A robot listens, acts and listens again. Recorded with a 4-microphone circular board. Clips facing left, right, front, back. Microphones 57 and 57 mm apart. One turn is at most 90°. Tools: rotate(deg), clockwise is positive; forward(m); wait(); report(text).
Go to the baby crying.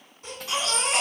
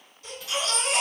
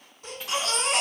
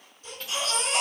rotate(-30)
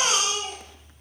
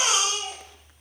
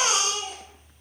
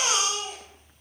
rotate(10)
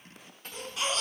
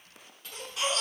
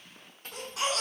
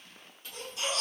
forward(1.0)
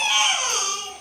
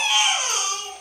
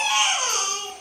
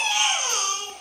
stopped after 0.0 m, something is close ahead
report("Blocked. The baby crying is further on, straight ahead.")